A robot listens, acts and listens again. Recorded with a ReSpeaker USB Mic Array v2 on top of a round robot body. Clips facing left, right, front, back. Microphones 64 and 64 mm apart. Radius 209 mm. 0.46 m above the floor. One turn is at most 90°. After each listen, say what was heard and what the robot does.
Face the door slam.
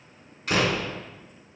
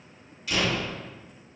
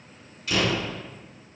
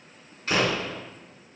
The door slam: 130° left. Turn 90° left.
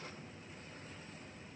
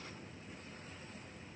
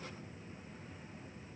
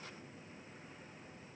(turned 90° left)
Nothing new. It was at 40° left. Turn 40° left.
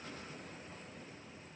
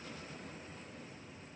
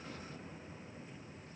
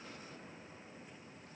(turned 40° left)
Facing where the door slam came from. I can't hear it now.